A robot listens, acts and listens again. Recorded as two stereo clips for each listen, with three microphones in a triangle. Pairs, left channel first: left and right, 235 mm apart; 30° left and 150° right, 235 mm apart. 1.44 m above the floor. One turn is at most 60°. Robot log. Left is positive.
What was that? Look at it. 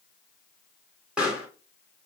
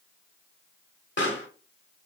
end: Facing the pop.